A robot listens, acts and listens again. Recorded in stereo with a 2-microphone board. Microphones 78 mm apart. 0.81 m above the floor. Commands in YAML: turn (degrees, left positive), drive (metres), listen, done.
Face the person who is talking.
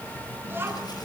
turn: -30
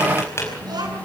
turn: -115
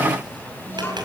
turn: 30
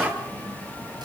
done: "Found it: a child speaking, straight ahead."